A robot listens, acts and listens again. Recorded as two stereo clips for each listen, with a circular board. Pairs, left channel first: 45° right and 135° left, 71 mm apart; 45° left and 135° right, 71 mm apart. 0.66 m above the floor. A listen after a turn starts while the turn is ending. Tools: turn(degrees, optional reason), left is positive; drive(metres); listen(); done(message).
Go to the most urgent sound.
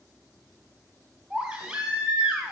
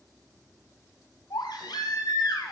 turn(degrees=55, reason="The baby crying: 55° left.")
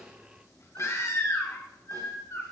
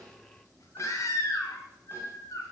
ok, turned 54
drive(metres=1.0)
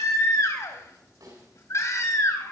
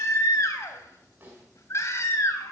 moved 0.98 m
drive(metres=1.0)
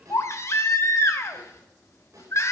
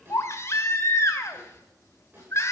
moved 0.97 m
drive(metres=1.0)
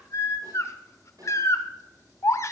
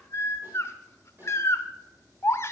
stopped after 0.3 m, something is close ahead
done("Arrived at the baby crying, straight ahead.")